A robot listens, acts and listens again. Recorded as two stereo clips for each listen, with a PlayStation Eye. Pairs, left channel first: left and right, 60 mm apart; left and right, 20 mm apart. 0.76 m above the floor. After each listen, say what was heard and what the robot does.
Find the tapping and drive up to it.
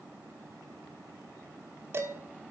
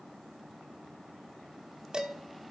Keep listening.
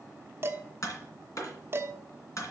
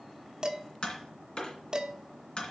The tapping: about 60° left or 120° left. Turn 60° left.
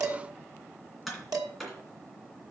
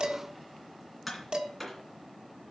Drive 1.0 m forward.
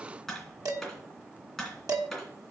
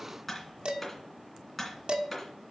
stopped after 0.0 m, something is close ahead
Something is in my way. I am facing the tapping but have not reached it.